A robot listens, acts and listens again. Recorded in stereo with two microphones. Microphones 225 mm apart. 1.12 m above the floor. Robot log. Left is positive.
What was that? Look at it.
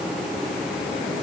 cmd idle
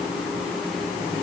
cmd idle
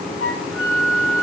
note: The flute: about 65° left or 115° left.
cmd yaw +65
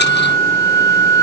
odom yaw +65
note: So it is at 10° left.
cmd yaw +10
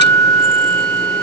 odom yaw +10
end: Facing the flute.